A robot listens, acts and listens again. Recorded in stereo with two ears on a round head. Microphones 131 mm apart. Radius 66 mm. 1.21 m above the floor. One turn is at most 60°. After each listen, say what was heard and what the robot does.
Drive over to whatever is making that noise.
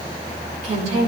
The woman speaking: about 50° right or 130° right. Turn 50° right.
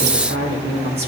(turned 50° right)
So it is at 75° right. Turn 60° right.
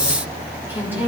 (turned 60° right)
The woman speaking is now 15° right. Turn 15° right.
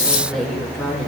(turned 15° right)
Drive 1.0 m forward.
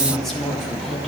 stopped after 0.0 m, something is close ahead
Something is in my way. I am facing the woman speaking but have not reached it.